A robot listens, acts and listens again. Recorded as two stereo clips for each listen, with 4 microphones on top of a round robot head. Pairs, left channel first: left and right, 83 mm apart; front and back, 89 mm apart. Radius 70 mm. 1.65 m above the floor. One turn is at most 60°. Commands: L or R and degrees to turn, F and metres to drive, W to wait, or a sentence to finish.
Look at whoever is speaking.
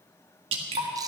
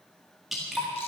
W
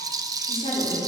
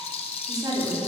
L60
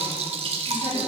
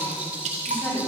L60
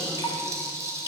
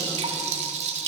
L15
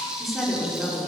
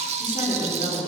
Found it: a woman speaking, straight ahead, over 4 m away.